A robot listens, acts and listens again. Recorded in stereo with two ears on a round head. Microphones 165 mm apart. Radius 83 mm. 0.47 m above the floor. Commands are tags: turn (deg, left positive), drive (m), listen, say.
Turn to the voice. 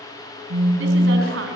<turn deg="-75"/>
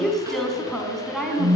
<say>Facing the woman speaking.</say>